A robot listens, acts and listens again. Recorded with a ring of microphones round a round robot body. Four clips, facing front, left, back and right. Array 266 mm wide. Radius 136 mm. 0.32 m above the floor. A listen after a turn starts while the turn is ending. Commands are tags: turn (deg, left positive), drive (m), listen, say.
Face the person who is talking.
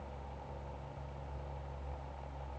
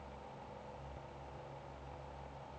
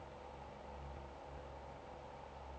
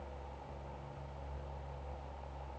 <listen/>
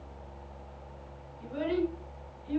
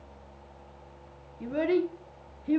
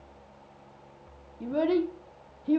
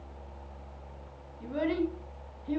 <turn deg="155"/>
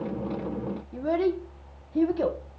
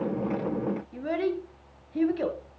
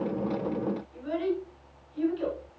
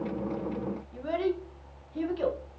<turn deg="20"/>
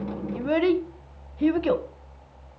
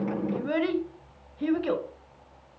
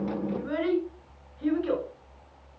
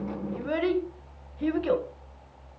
<say>Facing the child speaking.</say>